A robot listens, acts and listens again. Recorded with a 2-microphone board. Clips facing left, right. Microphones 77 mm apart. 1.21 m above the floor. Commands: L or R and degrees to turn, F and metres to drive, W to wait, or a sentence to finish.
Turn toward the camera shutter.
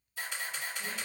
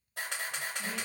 R65
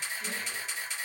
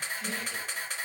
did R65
R50
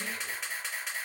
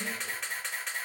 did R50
Found it: a camera shutter, straight ahead, 1 to 2 m away.